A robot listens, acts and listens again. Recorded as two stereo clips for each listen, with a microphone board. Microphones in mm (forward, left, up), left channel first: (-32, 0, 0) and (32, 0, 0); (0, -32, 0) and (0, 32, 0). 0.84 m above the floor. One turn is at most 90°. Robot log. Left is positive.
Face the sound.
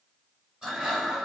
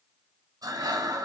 note: The breathing: 75° left.
cmd yaw +75
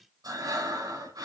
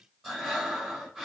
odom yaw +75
end: Found it: breathing, straight ahead.